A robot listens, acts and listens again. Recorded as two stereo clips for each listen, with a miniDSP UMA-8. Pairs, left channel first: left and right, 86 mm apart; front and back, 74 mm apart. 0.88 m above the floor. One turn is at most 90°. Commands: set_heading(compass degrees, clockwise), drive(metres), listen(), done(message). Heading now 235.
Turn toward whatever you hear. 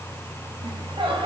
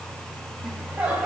set_heading(325)
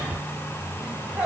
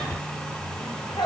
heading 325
set_heading(340)
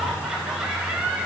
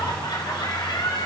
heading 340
set_heading(350)
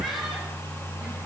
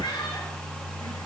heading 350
done("Facing the laughter, over 4 m away.")